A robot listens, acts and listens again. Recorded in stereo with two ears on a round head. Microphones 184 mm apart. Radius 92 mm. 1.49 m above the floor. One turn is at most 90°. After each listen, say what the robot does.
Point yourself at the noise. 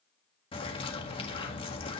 Turn 25° left.
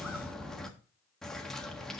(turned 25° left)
Found it: a bird, straight ahead.